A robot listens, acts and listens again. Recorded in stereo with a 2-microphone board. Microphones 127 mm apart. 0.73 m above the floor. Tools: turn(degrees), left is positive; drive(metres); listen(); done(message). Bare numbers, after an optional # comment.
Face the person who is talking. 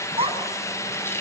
# The child speaking: about 50° right or 130° right.
turn(-50)
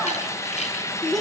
done("Facing the child speaking.")